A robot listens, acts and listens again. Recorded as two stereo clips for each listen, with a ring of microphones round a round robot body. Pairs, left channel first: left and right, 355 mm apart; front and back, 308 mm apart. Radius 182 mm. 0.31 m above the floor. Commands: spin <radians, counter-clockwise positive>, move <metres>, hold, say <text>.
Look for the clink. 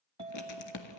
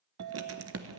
spin -2.88
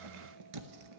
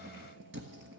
hold
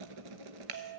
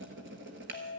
spin -0.96
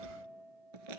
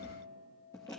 spin -0.35
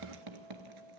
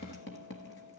say Found it: a clink, straight ahead.